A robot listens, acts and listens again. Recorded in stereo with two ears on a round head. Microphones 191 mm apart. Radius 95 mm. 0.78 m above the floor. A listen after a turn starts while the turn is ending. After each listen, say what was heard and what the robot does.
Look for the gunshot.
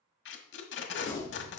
The gunshot: about 60° left or 120° left. Turn 60° left.
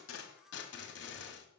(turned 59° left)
Keep listening.
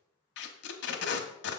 I heard a gunshot, but can't make it out now. It was about straight ahead or 60° left.